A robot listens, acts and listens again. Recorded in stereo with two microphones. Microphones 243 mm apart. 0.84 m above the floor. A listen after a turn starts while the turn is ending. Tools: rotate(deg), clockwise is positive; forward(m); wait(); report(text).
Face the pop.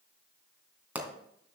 rotate(30)
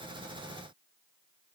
wait()
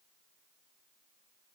report("I heard a pop, but can't make it out now. It was about 25° left or 145° right.")